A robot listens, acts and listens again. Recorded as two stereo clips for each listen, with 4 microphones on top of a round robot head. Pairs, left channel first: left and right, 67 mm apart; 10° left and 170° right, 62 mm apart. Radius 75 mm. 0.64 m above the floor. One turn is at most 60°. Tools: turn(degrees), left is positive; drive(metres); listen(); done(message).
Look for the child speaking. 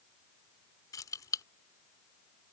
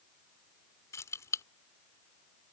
listen()
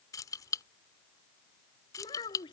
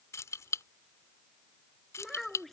turn(degrees=60)
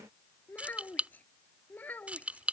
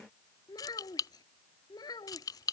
turn(degrees=25)
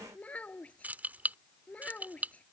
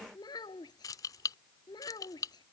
turn(degrees=20)
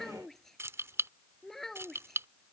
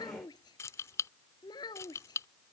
done("Found it: a child speaking, straight ahead.")